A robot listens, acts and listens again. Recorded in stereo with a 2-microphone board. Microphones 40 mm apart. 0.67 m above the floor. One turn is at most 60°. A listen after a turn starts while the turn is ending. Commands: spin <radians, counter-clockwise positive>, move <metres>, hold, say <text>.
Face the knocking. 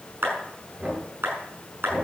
spin -0.52
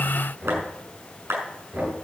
spin -1.05
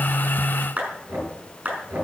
spin -1.05
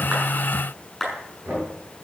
spin -0.79
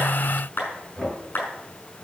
say Facing the knocking.